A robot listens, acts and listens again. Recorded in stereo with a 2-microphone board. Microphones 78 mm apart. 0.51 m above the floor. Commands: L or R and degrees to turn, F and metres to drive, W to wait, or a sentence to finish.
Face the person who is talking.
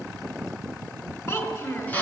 L40
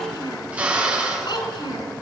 L100
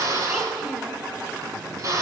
W
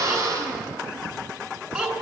R15
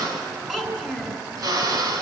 Facing the child speaking.